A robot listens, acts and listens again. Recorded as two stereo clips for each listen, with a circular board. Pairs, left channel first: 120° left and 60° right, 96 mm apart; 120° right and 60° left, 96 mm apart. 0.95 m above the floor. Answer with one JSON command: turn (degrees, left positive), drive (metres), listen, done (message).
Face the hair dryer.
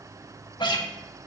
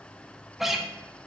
{"listen": true}
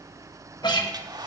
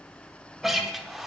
{"turn": -25}
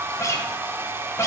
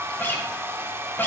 {"done": "Facing the hair dryer."}